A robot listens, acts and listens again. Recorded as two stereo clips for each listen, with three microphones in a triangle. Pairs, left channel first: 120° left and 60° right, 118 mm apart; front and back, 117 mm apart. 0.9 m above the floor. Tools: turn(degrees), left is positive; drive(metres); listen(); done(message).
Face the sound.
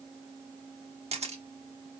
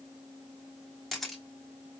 turn(degrees=-90)
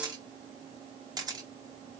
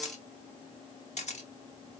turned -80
done("Facing the camera shutter.")